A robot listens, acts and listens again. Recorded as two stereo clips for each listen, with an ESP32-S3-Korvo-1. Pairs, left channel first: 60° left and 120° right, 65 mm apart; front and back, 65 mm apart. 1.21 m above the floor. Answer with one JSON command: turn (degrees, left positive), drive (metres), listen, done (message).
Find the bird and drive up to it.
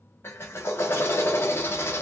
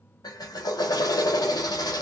{"listen": true}
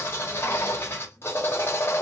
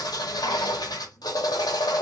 {"listen": true}
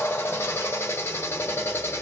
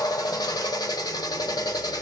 {"done": "I can't make out a bird to turn to."}